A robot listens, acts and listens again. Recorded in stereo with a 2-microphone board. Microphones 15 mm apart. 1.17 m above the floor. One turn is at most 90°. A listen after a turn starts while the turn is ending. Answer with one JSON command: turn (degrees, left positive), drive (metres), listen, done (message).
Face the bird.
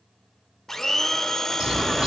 {"turn": -90}
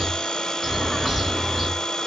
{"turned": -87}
{"done": "Facing the bird, 2 to 4 m away."}